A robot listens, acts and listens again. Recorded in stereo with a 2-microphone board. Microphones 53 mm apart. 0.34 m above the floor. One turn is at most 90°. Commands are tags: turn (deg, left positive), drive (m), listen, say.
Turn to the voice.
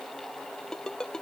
<listen/>
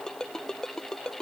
<listen/>
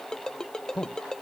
<turn deg="20"/>
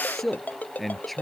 <say>Facing the man speaking.</say>